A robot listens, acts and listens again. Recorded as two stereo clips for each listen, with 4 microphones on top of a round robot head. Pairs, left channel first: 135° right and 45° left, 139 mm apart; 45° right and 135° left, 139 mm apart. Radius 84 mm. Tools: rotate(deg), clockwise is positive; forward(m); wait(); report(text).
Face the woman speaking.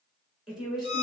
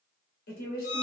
rotate(40)
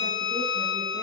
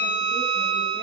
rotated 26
rotate(15)
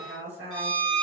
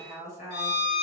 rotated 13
report("Found it: a woman speaking, straight ahead.")